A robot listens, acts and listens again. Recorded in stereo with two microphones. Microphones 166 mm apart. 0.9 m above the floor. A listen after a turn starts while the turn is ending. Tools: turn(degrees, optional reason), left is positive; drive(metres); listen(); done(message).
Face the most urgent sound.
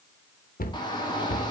turn(degrees=25, reason="The shout: about 25° left or 155° left.")
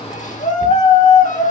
turn(degrees=125, reason="So it is at 125° left.")
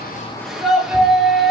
done("Found it: a shout, straight ahead, 2 to 4 m away.")